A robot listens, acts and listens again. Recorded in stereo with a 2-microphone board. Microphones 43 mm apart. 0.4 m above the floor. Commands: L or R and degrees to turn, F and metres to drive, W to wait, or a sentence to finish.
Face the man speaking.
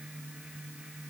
W
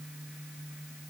W
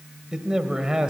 R15
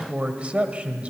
R150
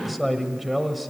Facing the man speaking, 1 to 2 m away.